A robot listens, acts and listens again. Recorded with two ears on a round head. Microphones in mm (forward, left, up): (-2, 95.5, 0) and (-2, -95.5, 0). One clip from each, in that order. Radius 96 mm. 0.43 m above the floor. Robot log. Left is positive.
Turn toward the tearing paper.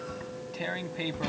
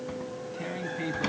note: The tearing paper: about 50° left or 130° left.
cmd yaw +50
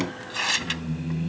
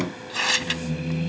end: Facing the tearing paper.